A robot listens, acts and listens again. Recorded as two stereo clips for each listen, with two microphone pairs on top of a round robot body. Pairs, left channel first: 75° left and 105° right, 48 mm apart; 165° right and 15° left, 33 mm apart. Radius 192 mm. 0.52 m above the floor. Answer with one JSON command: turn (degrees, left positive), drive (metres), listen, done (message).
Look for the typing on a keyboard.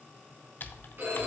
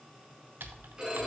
{"turn": 25}
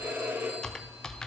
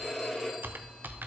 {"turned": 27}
{"done": "Facing the typing on a keyboard."}